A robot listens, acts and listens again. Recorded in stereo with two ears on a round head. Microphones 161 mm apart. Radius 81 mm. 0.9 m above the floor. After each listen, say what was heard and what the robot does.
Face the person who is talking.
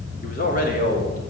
The man speaking: about 50° left or 130° left. Turn 50° left.
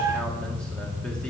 Keep listening.
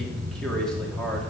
Facing the man speaking, 2 to 4 m away.